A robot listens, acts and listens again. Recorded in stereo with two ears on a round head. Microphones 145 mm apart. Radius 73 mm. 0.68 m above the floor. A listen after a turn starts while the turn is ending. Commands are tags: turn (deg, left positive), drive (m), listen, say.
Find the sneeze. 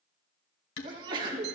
<turn deg="-30"/>
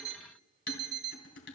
<listen/>
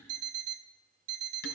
<say>I heard a sneeze, but can't make it out now. It was about straight ahead or 120° right.</say>